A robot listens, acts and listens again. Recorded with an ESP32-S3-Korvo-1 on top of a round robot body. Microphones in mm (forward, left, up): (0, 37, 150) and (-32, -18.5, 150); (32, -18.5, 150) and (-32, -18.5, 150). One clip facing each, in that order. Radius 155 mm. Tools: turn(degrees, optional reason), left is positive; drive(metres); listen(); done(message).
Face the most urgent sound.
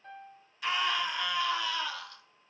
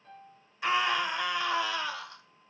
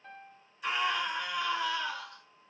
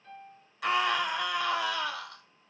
turn(degrees=175, reason="The scream: 175° left.")
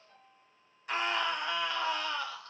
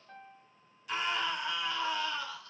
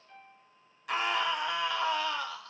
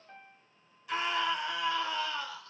turn(degrees=15, reason="The scream is now 15° left.")
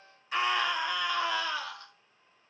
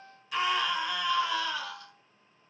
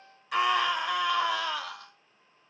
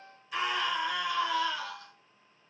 done("Facing the scream.")